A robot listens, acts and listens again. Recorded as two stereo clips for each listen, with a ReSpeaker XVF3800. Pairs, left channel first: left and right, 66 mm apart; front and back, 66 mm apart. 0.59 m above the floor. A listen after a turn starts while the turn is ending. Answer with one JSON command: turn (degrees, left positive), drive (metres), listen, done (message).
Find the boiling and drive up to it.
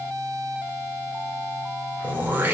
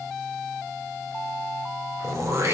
{"listen": true}
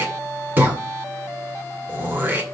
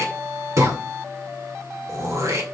{"listen": true}
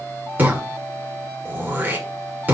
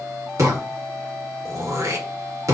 {"done": "I can't make out boiling to turn to."}